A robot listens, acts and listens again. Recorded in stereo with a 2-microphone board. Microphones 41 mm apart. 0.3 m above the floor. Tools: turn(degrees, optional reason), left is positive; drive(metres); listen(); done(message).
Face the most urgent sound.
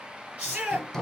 turn(degrees=-35, reason="The shout: about 35° right or 145° right.")
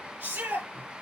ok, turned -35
turn(degrees=-110, reason="So it is at 110° right.")
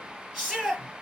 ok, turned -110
done("Facing the shout, over 4 m away.")